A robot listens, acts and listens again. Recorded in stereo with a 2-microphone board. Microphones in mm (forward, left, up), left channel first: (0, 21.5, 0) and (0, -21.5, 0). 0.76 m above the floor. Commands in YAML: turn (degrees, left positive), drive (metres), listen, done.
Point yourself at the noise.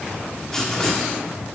turn: 30
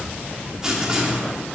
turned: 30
turn: -15
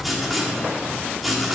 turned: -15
done: "Found it: writing, straight ahead, 1 to 2 m away."